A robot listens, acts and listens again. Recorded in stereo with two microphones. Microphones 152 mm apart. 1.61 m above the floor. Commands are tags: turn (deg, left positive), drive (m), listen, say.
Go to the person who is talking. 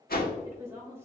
<turn deg="-15"/>
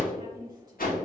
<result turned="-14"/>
<turn deg="-150"/>
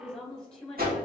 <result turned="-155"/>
<drive m="1.0"/>
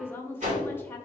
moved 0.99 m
<turn deg="15"/>
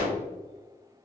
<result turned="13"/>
<listen/>
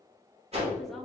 <listen/>
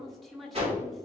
<drive m="1.0"/>
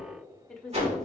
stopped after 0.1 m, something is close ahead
<say>I am next to the woman speaking.</say>